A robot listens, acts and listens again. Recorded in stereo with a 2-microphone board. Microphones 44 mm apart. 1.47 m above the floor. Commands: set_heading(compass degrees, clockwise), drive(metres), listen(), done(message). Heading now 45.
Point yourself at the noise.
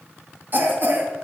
set_heading(90)
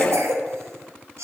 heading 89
set_heading(179)
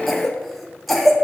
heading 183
done("Facing the cough, under 1 m away.")